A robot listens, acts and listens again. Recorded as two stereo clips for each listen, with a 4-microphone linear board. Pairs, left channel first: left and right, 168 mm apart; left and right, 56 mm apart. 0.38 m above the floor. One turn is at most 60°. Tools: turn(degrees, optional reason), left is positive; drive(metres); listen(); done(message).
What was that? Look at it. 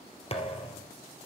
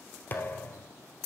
turn(degrees=35, reason="The thud: about 35° left or 145° left.")
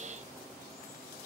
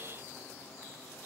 listen()
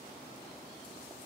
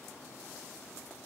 done("I heard a thud, but can't make it out now. It was about straight ahead or 110° left.")